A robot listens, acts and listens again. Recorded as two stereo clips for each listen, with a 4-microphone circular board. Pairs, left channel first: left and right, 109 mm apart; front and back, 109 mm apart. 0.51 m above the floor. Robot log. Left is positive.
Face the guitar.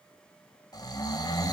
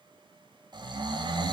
cmd idle
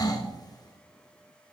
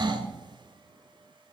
cmd idle
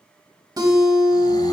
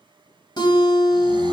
note: The guitar: 40° right.
cmd yaw -40
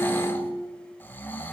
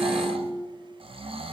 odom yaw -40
note: The guitar is now 20° right.
cmd yaw -20
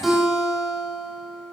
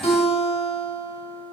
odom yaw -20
end: Found it: a guitar, straight ahead.